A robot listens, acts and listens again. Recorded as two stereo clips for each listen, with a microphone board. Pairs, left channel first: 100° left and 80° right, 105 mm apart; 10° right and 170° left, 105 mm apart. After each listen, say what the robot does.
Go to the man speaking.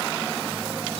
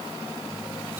Keep listening.
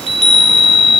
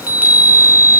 Keep listening.
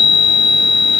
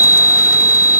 I can't make out a man speaking, only a chime.